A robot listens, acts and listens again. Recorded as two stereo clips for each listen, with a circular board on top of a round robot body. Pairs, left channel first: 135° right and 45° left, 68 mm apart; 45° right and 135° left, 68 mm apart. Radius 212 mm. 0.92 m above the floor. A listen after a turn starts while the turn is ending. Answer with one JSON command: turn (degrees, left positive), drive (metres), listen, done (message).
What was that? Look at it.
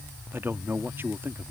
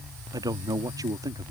{"turn": 105}
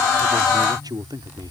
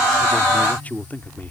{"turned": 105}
{"turn": 20}
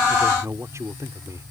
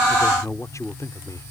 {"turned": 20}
{"done": "Facing the man speaking."}